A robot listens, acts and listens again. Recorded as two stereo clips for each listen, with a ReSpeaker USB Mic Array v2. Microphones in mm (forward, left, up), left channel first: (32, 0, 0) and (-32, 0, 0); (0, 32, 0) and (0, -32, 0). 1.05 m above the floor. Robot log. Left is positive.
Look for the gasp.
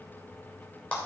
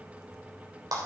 cmd idle
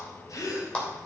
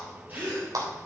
note: The gasp: 30° right.
cmd yaw -30
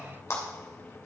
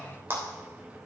end: I heard a gasp from this way, but can't make it out now.